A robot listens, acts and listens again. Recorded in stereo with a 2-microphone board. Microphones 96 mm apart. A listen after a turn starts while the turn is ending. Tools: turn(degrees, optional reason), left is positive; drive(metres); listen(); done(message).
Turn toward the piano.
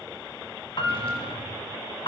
turn(degrees=55, reason="The piano: about 55° left or 125° left.")
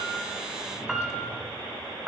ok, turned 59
done("Found it: a piano, straight ahead, under 1 m away.")